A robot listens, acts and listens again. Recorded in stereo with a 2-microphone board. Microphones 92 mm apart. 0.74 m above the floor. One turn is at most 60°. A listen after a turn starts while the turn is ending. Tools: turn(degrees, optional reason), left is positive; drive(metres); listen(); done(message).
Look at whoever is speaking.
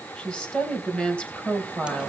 turn(degrees=30)
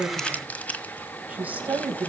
turn(degrees=-20, reason="So it is at 20° right.")
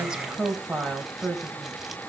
done("Found it: a woman speaking, straight ahead.")